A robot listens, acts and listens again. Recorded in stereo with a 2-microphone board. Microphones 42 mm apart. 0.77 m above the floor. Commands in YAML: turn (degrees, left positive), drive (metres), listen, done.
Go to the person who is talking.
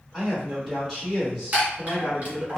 turn: -30
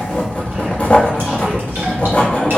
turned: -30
listen: true
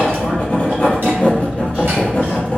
listen: true
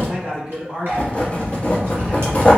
turn: -145
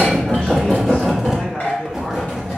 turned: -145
turn: 15
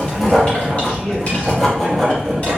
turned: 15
listen: true
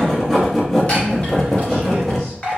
listen: true
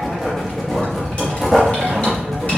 done: "Facing where the man speaking came from. I can't hear it now. I did not reach it."